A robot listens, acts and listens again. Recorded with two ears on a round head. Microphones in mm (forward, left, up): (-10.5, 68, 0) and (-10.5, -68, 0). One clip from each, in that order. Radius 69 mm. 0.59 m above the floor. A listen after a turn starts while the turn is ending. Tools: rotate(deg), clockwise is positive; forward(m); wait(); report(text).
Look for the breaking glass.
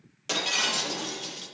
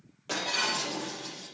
rotate(-90)
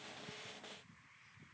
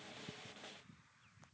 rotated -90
report("I heard breaking glass from this way, but can't make it out now.")